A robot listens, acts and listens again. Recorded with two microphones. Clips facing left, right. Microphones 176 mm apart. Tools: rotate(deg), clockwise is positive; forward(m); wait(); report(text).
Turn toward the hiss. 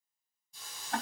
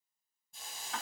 rotate(55)
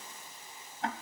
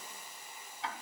rotate(15)
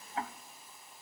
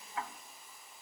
report("Facing the hiss, 2 to 4 m away.")